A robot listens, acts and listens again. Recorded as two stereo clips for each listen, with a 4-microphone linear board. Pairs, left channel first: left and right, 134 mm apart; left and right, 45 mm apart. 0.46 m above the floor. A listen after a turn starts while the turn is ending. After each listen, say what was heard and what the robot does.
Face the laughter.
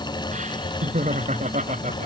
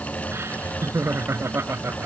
The laughter: about 60° right or 120° right. Turn 60° right.
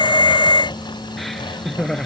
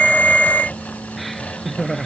Facing the laughter.